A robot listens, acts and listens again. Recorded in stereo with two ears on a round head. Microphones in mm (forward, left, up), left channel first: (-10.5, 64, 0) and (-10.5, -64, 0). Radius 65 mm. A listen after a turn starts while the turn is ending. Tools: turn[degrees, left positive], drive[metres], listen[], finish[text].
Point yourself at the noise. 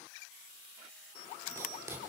Thought: The writing: about 20° right or 160° right.
Action: turn[-20]
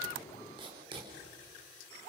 Thought: So it is at 140° right.
Action: turn[-140]
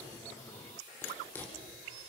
Thought: The writing is now 15° left.
Action: turn[15]
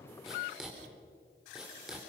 Action: finish[Facing the writing, 2 to 4 m away.]